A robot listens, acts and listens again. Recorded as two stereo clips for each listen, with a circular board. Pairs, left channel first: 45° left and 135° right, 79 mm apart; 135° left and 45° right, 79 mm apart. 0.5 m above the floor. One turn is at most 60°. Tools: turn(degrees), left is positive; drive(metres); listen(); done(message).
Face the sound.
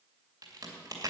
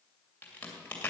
turn(degrees=-60)
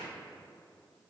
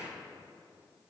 turn(degrees=-60)
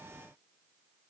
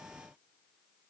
turn(degrees=-40)
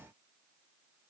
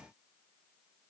done("I heard a crack from this way, but can't make it out now.")